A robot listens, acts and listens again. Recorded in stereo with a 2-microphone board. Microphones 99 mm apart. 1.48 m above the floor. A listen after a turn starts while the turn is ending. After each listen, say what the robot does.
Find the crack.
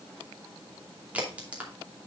Turn 30° right.
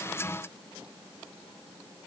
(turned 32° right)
Keep listening.
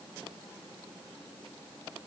I heard a crack, but can't make it out now. It was about 20° left or 135° right.